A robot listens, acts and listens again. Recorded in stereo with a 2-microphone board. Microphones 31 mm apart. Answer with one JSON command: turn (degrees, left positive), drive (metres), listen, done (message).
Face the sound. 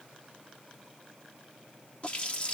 {"turn": 40}
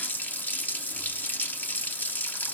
{"turn": 105}
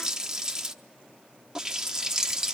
{"turn": -20}
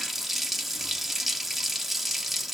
{"done": "Found it: a running tap, straight ahead, 1 to 2 m away."}